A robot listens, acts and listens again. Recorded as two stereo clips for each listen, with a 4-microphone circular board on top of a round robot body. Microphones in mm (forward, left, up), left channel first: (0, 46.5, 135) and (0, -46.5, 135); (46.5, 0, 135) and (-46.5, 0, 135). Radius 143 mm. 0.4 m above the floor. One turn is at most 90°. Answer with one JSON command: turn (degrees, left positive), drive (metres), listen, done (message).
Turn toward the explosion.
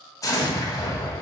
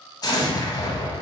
{"turn": 40}
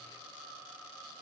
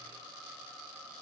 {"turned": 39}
{"done": "I heard an explosion from this way, but can't make it out now."}